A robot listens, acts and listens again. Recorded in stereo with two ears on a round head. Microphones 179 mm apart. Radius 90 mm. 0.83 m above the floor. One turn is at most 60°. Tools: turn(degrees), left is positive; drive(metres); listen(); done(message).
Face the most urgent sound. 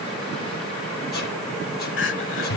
turn(degrees=60)
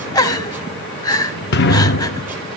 turn(degrees=20)
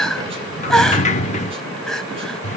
done("Found it: crying, straight ahead, 1 to 2 m away.")